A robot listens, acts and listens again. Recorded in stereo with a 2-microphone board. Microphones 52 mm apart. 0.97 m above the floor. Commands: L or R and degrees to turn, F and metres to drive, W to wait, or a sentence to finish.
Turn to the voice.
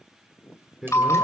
R30
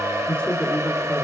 L25
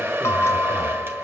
W
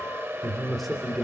Found it: a man speaking, straight ahead.